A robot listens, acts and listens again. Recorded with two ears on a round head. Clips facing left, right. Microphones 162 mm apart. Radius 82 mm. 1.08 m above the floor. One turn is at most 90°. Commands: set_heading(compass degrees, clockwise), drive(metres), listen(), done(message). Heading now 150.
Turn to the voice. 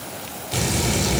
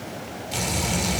set_heading(80)
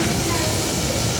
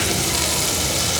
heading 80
set_heading(40)
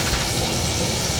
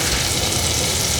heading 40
done("Found it: a child speaking, straight ahead, 1 to 2 m away.")